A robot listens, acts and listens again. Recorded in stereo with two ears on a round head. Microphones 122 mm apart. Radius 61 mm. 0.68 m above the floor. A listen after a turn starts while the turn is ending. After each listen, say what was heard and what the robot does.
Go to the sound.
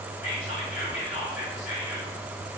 The whispering: about 50° left or 130° left. Turn 50° left.
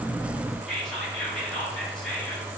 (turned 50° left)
Drive 1.0 m forward.
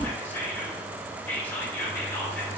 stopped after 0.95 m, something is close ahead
The whispering is now 15° left. Turn 15° left.
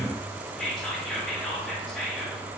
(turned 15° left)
I am next to the whispering.